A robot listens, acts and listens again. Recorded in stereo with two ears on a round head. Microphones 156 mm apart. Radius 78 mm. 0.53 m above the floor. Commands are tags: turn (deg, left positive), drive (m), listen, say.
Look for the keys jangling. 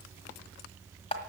<listen/>
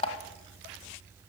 <listen/>
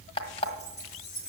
<turn deg="40"/>
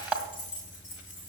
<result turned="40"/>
<turn deg="105"/>
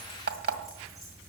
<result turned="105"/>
<listen/>
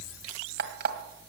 <listen/>
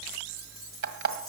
<say>Facing where the keys jangling came from. I can't hear it now.</say>